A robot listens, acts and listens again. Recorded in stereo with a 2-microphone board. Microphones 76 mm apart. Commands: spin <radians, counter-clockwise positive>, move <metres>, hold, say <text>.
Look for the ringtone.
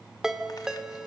spin -0.52
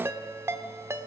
spin -2.53
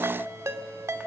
spin -0.70
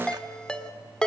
spin 0.17
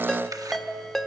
say Found it: a ringtone, straight ahead.